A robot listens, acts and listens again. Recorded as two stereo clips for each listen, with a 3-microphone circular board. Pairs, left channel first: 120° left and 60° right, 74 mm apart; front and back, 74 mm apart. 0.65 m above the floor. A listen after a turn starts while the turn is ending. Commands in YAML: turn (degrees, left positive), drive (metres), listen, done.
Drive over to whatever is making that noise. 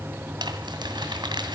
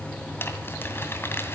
turn: -60
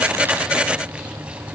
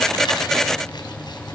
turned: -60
listen: true
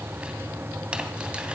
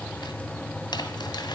listen: true
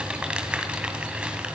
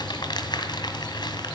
turn: 15
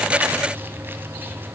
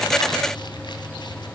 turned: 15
listen: true
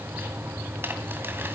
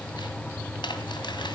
drive: 1.0
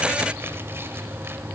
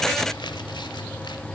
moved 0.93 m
listen: true
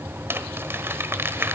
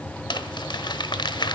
drive: 1.0
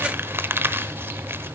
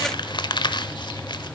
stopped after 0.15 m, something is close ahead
done: "I am next to the crumpling."